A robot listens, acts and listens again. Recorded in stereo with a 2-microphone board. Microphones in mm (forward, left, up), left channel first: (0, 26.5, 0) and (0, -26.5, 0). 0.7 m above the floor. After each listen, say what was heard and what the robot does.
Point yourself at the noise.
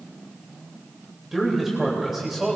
Turn 30° right.
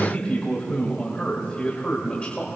So it is at 25° left. Turn 25° left.
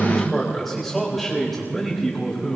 Facing the man speaking.